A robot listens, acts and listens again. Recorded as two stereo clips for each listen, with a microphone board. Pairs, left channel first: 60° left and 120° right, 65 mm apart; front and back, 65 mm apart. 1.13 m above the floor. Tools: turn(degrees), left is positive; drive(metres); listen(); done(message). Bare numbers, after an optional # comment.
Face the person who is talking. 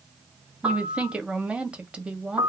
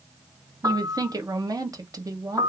# The woman speaking: 170° left.
turn(170)
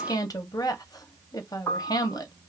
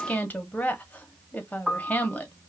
# The woman speaking is now 65° left.
turn(65)
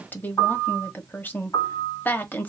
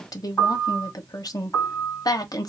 done("Found it: a woman speaking, straight ahead.")